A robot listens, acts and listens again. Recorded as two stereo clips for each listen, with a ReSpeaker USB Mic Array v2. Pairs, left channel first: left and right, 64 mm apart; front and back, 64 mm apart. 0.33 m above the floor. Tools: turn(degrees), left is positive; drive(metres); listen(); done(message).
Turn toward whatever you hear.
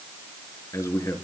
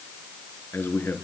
turn(degrees=55)
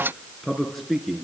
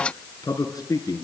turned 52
done("Found it: a man speaking, straight ahead.")